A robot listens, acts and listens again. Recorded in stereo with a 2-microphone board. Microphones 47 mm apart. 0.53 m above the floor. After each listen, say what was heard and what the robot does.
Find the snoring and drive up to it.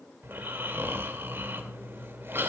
The snoring: about 55° right or 125° right. Turn 55° right.
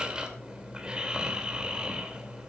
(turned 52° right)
So it is at 25° right. Turn 25° right.
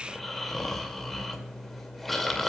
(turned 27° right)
Drive 1.0 m forward.
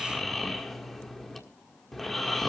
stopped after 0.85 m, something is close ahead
I am next to the snoring.